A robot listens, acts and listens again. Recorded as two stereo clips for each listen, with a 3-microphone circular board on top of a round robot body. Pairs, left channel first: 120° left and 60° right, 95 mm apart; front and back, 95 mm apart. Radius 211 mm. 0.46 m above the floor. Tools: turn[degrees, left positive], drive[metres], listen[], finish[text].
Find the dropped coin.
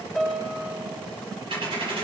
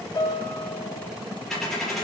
Thought: The dropped coin: 85° right.
Action: turn[-85]
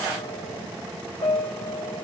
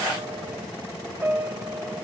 Action: finish[Facing where the dropped coin came from. I can't hear it now.]